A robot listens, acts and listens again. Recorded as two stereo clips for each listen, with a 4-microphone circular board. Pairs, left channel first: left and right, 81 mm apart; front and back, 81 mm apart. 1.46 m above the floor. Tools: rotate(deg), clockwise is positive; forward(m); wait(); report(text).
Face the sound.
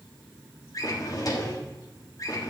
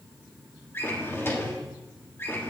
rotate(-60)
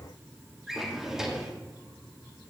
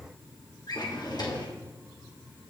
report("Found it: a drawer, straight ahead, 1 to 2 m away.")